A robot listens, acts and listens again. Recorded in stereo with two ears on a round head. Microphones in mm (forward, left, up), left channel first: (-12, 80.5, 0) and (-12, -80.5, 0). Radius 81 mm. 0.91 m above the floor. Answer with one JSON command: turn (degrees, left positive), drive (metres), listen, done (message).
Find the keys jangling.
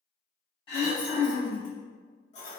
{"turn": 40}
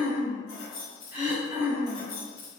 {"turn": 45}
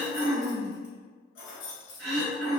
{"turn": 85}
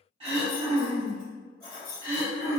{"turn": 10}
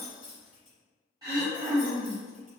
{"done": "Found it: keys jangling, straight ahead."}